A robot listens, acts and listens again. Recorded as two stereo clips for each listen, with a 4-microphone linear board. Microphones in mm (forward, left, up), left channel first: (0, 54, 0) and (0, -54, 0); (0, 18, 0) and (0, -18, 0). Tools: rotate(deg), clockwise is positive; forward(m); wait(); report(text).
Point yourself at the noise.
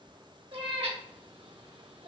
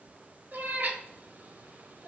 rotate(65)
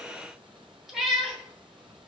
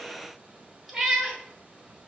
report("Facing the cat meowing, 1 to 2 m away.")